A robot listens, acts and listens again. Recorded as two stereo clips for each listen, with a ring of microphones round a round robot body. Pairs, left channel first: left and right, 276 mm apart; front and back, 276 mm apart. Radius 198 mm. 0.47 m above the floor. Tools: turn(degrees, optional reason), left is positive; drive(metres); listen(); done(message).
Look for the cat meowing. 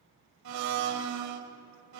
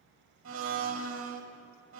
listen()
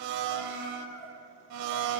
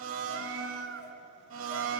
turn(degrees=140, reason="The cat meowing: 140° left.")
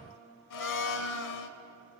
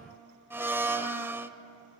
listen()
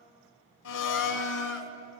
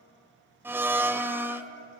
listen()
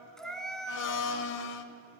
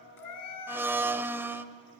done("Facing the cat meowing, 2 to 4 m away.")